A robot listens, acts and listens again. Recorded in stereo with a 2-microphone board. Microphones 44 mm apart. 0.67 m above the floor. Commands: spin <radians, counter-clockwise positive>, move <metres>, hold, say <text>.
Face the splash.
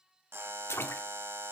spin 1.22
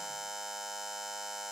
hold
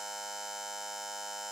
say I heard a splash, but can't make it out now. It was about straight ahead or 40° left.